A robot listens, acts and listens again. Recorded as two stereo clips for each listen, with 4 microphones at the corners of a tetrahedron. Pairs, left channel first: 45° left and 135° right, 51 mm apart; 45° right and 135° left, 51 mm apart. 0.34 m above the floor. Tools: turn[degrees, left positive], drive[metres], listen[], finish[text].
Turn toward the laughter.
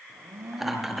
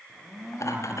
Thought: The laughter: 55° right.
Action: turn[-55]
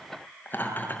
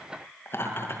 Thought: The laughter is now 10° right.
Action: turn[-10]
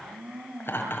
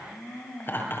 Action: finish[Found it: laughter, straight ahead.]